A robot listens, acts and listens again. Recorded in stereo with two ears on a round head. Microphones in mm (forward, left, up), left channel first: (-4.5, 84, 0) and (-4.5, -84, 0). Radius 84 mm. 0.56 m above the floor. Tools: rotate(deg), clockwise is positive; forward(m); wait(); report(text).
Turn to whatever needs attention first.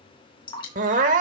rotate(45)
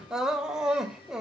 report("Found it: crying, straight ahead.")